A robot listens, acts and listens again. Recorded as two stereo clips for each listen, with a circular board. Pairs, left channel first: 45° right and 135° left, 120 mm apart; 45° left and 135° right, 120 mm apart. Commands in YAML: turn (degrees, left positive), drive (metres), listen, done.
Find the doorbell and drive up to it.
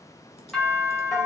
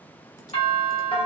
turn: 40
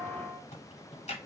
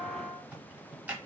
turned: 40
listen: true
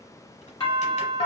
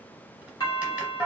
drive: 1.0
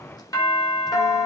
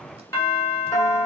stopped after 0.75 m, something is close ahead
done: "I am next to the doorbell."